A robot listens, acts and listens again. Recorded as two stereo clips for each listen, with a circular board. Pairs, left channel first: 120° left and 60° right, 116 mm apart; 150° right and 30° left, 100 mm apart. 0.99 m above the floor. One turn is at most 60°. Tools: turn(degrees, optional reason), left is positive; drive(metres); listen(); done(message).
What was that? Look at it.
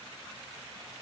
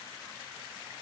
listen()
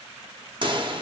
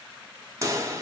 turn(degrees=-25, reason="The pop: 25° right.")
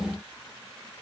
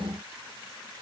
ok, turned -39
turn(degrees=15, reason="Nothing new. It was at 15° left.")
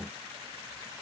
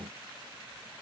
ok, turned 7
done("Facing where the pop came from. I can't hear it now.")